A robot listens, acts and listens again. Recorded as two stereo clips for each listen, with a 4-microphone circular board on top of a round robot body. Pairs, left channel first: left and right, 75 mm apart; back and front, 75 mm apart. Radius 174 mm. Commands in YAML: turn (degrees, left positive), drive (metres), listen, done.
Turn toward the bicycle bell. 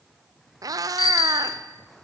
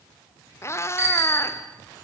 turn: 70
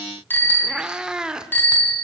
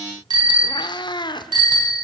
turn: 25
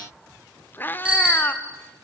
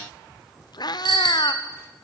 turn: -10
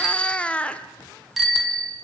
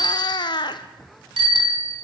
done: "Facing the bicycle bell."